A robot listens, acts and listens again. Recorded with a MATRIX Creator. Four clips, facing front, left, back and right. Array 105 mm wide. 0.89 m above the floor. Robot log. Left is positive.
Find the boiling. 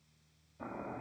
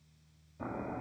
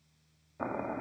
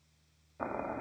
note: The boiling: 145° right.
cmd yaw -145
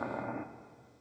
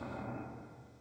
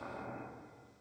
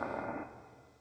note: The boiling is now 45° right.
cmd yaw -45
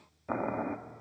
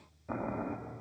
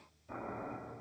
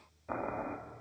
note: The boiling is now 10° right.
cmd yaw -10
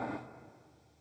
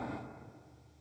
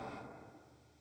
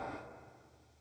end: Found it: boiling, straight ahead, 1 to 2 m away.